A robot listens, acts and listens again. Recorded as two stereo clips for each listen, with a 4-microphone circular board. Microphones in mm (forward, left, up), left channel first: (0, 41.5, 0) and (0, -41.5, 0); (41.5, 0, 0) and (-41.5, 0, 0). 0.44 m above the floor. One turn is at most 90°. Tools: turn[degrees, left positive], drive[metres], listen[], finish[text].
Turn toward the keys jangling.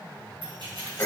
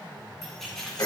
Thought: The keys jangling: 80° right.
Action: turn[-80]
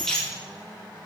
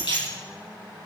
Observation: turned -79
Thought: The keys jangling is now 10° left.
Action: turn[10]
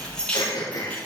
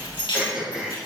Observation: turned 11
Thought: The keys jangling is now 15° left.
Action: turn[15]
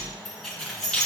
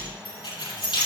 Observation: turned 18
Thought: The keys jangling is now 10° left.
Action: turn[10]
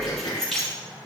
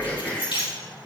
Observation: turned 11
Action: finish[Facing the keys jangling, over 4 m away.]